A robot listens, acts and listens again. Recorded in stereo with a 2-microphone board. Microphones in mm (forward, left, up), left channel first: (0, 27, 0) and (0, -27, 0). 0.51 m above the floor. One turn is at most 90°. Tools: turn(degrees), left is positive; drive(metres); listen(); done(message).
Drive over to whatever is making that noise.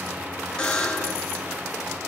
turn(degrees=30)
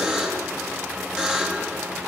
turn(degrees=-15)
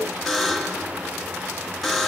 drive(metres=1.0)
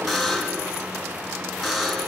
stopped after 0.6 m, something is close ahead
done("Blocked. The buzzer is further on, straight ahead.")